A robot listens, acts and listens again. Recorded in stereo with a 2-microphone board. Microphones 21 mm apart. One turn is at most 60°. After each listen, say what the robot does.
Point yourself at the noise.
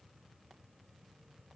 Keep listening.
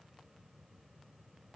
Keep listening.
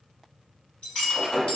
Turn 60° left.
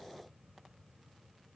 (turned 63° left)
Keep listening.
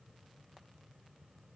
I heard breaking glass, but can't make it out now. It was about 10° left or 45° left.